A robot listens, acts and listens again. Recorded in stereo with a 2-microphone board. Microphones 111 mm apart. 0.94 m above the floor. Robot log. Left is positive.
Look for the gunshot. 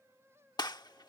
note: The gunshot: about 40° left or 140° left.
cmd yaw +40
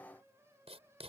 cmd idle
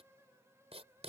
end: I heard a gunshot, but can't make it out now. It was about straight ahead or 100° left.